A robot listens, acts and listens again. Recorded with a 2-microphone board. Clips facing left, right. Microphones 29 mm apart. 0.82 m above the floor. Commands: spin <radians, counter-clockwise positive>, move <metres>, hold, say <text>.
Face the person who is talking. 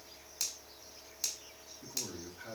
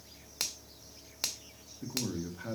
spin -0.35
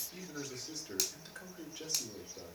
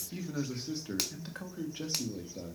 spin -2.44
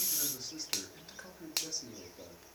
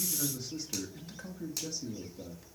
spin 0.17
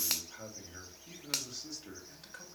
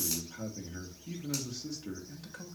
say Facing the man speaking.